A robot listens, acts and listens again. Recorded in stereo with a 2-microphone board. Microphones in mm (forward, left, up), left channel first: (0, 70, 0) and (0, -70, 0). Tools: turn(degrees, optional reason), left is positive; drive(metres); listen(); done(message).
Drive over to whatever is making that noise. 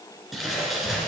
turn(degrees=30)
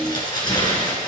turn(degrees=150, reason="So it is at 150° left.")
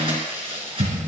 turn(degrees=-40, reason="The crumpling is now 40° right.")
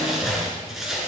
drive(metres=1.0)
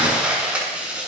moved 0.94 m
turn(degrees=-10, reason="The crumpling is now 10° right.")
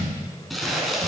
drive(metres=1.0)
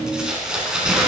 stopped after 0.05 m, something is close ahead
done("Something is in my way. I am facing the crumpling but have not reached it.")